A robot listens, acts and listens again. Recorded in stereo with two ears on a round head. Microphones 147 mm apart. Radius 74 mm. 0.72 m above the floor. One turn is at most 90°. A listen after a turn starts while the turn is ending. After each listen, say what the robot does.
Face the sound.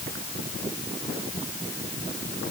Keep listening.
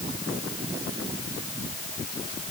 Keep listening.
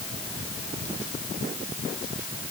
I can't make out anything.